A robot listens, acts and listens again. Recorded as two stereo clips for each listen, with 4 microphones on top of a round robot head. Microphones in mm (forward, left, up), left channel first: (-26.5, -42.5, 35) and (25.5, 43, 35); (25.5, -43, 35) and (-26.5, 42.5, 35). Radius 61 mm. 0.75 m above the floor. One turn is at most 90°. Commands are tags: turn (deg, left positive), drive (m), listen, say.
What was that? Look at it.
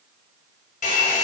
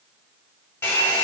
<turn deg="-90"/>
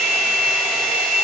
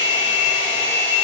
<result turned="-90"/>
<turn deg="-40"/>
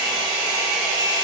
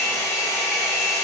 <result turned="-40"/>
<say>Facing the hair dryer, under 1 m away.</say>